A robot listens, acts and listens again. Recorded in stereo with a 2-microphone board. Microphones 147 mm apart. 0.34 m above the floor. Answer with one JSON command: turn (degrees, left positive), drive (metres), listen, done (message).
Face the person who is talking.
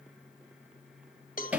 {"listen": true}
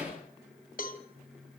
{"listen": true}
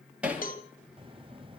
{"turn": -35}
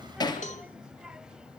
{"done": "Found it: a child speaking, straight ahead, under 1 m away."}